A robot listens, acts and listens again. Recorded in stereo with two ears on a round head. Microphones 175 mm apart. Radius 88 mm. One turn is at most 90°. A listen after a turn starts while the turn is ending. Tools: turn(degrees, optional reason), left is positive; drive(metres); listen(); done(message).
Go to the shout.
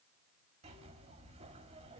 listen()
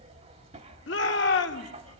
turn(degrees=65, reason="The shout: about 65° left or 115° left.")
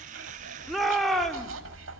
drive(metres=1.0)
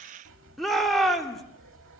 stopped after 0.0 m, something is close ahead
done("Something is in my way. I am facing the shout but have not reached it.")